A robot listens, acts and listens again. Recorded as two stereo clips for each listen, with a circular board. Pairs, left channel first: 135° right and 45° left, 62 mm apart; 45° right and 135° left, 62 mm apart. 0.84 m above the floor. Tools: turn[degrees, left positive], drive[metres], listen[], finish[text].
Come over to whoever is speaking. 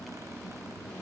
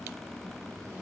Action: listen[]
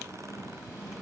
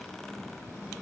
Action: listen[]
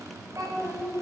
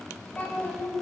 Thought: The child speaking: 25° left.
Action: turn[25]
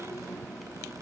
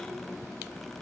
Action: listen[]
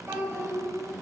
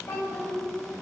Action: drive[1.0]
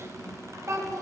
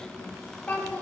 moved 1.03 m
Thought: The child speaking is now 15° left.
Action: turn[15]
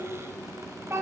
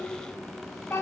Action: drive[1.0]
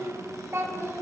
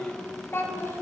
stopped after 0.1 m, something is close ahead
Action: finish[I am next to the child speaking.]